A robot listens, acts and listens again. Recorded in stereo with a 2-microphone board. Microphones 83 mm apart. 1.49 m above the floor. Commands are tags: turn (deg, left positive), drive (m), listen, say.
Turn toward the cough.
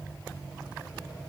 <listen/>
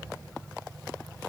<listen/>
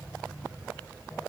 <say>I can't make out a cough to turn to.</say>